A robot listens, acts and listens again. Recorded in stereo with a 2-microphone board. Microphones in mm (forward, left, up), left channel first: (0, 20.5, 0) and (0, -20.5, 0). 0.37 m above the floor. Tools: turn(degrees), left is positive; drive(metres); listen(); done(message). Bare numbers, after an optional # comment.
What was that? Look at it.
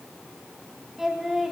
turn(-30)
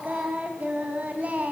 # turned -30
# So it is at 140° right.
turn(-140)
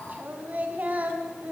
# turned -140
# The singing is now 45° right.
turn(-45)
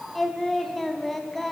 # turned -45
done("Facing the singing.")